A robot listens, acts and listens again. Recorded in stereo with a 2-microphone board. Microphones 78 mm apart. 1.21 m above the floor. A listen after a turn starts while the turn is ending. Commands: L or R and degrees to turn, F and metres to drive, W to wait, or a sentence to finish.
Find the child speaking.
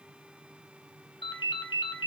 W
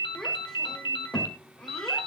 L30
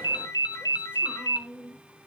R20
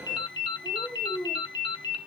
Found it: a child speaking, straight ahead, 2 to 4 m away.